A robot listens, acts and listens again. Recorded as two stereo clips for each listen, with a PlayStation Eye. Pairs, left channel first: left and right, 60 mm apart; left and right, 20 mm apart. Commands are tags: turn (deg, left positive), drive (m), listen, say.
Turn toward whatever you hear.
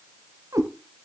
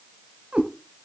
<turn deg="-90"/>
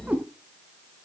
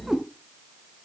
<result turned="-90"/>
<turn deg="-25"/>
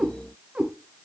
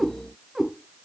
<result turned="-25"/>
<turn deg="-15"/>
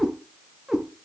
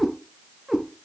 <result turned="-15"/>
<say>Found it: a cat meowing, straight ahead.</say>